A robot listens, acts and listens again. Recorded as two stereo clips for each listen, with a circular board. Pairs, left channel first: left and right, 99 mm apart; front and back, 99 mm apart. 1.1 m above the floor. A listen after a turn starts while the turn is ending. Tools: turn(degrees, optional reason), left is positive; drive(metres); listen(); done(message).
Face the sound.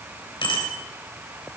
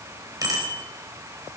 turn(degrees=125, reason="The bicycle bell: 125° left.")
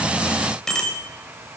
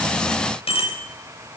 done("Facing the bicycle bell, 2 to 4 m away.")